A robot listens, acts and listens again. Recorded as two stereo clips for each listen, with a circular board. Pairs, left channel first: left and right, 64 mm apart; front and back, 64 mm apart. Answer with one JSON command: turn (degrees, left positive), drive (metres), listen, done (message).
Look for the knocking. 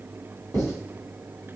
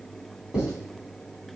{"listen": true}
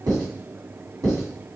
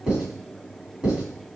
{"listen": true}
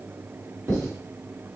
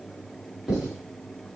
{"done": "I can't make out knocking, only writing."}